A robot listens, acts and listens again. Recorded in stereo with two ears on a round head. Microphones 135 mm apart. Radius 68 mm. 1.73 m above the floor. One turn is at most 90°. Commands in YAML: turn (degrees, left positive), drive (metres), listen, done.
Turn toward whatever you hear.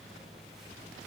listen: true
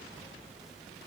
listen: true
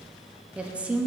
turn: -30
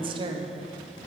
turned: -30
turn: -90
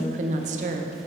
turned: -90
turn: -55
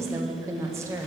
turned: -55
turn: -20
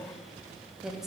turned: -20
done: "Facing the woman speaking, under 1 m away."